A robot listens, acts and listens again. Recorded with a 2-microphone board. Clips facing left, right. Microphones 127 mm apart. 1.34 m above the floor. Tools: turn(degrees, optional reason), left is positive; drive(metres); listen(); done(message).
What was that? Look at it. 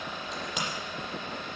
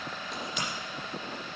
turn(degrees=90)
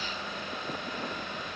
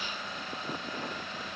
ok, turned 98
turn(degrees=-10, reason="Nothing new. It was at 10° right.")
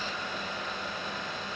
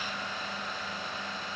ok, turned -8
done("I heard a crack from this way, but can't make it out now.")